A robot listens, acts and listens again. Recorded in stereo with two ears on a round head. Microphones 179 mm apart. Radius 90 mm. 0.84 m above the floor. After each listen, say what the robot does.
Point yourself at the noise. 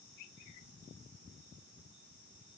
Keep listening.
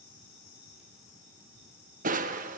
Turn 40° right.
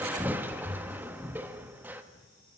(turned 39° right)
Turn 10° right.
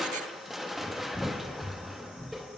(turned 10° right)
Found it: crushing, straight ahead, 1 to 2 m away.